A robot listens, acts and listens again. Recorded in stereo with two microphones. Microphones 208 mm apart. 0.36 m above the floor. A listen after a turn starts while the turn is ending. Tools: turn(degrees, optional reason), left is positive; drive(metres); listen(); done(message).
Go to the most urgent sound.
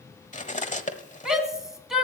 turn(degrees=30)
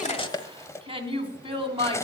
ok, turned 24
turn(degrees=-30, reason="So it is at 30° right.")
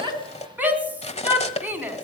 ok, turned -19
turn(degrees=-10, reason="The shout is now 10° right.")
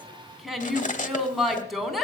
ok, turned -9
drive(metres=1.0)
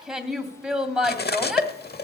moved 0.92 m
drive(metres=1.0)
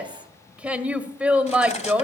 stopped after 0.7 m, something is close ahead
turn(degrees=-10, reason="The shout is now 10° right.")
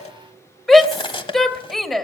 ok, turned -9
done("I am next to the shout.")